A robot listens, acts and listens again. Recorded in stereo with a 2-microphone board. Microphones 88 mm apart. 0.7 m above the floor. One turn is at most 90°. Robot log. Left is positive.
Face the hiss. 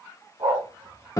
cmd idle
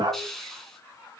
cmd yaw +30
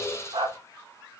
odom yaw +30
note: So it is at 150° left.
cmd yaw +90
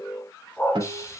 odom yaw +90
note: The hiss is now 35° left.
cmd yaw +35
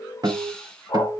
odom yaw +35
end: Found it: a hiss, straight ahead, 2 to 4 m away.